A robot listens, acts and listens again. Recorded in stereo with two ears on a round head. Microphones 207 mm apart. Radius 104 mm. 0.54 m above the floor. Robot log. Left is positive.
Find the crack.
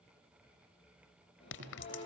note: The crack: about 55° left or 125° left.
cmd yaw +55
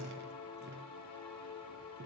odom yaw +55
cmd idle
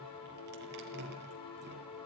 end: I heard a crack, but can't make it out now. It was about straight ahead or 70° left.